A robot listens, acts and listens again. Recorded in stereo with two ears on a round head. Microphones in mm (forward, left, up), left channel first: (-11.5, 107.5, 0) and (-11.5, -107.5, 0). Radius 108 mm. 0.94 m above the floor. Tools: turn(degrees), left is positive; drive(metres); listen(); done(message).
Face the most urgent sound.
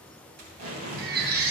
turn(degrees=-40)
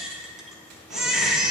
done("Facing the baby crying, under 1 m away.")